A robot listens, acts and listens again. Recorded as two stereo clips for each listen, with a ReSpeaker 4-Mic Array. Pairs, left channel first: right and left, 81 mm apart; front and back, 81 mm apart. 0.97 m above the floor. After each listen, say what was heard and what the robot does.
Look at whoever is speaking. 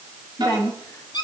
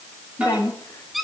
The woman speaking: 50° right. Turn 50° right.
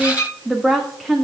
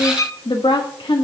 Found it: a woman speaking, straight ahead, 1 to 2 m away.